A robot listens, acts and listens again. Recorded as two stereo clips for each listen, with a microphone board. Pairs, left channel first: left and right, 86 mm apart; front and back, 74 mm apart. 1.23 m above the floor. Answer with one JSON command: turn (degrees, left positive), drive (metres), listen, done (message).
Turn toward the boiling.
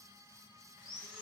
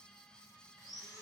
{"listen": true}
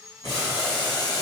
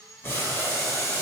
{"turn": 60}
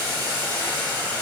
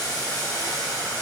{"turn": 20}
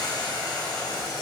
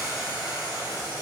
{"turn": 10}
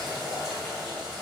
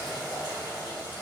{"done": "Facing the boiling."}